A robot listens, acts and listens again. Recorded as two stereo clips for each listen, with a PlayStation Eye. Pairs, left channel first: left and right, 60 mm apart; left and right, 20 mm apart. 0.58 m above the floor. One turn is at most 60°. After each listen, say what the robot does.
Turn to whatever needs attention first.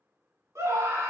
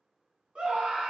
Turn 50° right.
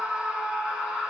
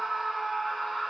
Turn 15° right.
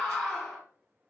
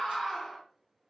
Found it: a scream, straight ahead, 1 to 2 m away.